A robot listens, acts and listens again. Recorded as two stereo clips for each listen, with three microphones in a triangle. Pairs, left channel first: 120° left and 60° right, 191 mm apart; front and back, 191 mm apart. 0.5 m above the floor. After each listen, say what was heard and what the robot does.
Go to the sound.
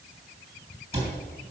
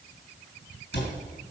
Drive 1.0 m forward.
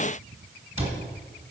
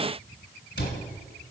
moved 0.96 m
Drive 1.0 m forward.
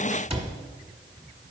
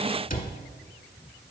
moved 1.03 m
The cupboard door is now 15° right. Turn 15° right.
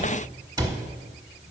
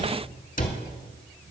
Drive 1.0 m forward.
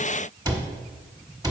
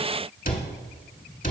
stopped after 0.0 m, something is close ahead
Arrived at the cupboard door, straight ahead.